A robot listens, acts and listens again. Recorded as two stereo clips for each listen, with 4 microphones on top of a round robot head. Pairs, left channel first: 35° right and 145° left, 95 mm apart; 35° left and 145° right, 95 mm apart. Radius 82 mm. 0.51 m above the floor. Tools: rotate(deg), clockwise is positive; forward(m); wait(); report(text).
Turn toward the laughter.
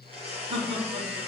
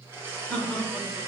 rotate(-120)
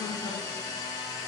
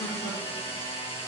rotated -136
rotate(20)
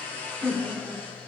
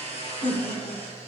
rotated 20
rotate(-55)
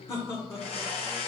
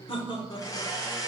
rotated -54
rotate(-15)
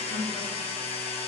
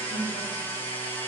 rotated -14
wait()
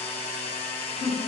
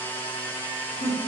rotate(-15)
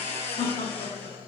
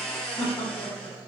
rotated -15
report("Found it: laughter, straight ahead, 1 to 2 m away.")